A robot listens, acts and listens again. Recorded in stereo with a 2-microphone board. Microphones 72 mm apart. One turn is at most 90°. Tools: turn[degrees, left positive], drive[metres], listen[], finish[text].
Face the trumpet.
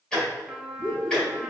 Action: turn[-30]
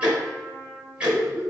Thought: So it is at 25° left.
Action: turn[25]
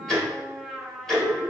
Action: finish[Facing the trumpet, under 1 m away.]